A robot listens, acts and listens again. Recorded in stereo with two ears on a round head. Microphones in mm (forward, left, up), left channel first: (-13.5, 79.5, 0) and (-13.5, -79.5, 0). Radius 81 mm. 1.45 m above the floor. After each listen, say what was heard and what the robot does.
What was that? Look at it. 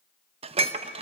The dishes clattering: about 35° right or 145° right. Turn 35° right.
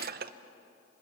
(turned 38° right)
So it is at 100° right. Turn 100° right.
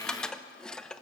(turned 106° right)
Facing the dishes clattering, under 1 m away.